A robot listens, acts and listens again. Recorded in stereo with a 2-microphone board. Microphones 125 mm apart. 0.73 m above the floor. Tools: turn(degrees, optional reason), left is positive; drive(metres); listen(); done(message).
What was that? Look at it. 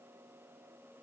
listen()
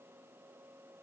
listen()
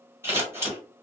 turn(degrees=-20, reason="The scissors: about 20° right or 160° right.")
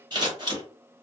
turn(degrees=-135, reason="So it is at 135° right.")
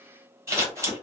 turn(degrees=-25, reason="The scissors is now 25° right.")
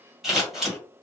done("Found it: scissors, straight ahead.")